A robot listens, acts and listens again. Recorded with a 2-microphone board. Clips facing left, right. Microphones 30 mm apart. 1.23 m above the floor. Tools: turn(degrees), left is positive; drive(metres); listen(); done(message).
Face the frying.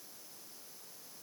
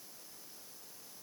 listen()
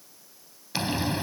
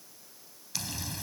turn(degrees=40)
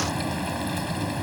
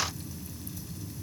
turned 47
turn(degrees=95)
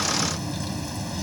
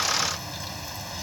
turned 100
done("Facing the frying.")